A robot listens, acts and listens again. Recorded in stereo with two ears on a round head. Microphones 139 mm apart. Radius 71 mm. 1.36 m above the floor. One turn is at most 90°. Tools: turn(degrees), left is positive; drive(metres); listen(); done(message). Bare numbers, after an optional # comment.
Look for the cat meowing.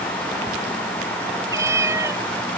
# The cat meowing: about 20° right or 160° right.
turn(-20)
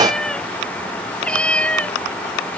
# So it is at 10° left.
turn(10)
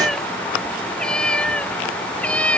done("Facing the cat meowing.")